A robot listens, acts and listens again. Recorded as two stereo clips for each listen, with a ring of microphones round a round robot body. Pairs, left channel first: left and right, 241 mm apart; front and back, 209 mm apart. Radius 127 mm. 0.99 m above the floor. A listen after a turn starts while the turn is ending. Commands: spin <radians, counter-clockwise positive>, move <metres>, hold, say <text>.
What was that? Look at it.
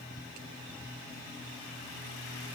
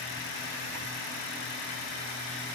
hold
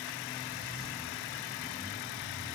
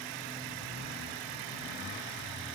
hold
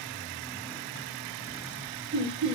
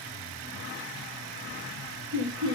spin -2.71
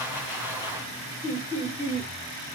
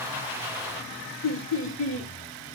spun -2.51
spin -0.17
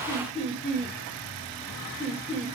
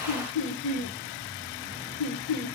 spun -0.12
say Facing the laughter, 1 to 2 m away.